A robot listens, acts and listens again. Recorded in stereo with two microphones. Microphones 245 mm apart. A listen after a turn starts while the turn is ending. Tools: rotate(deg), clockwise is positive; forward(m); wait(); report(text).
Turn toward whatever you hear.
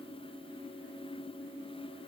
wait()
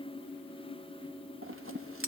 rotate(65)
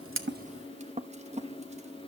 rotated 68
rotate(30)
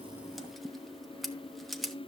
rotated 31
report("Facing the scissors, under 1 m away.")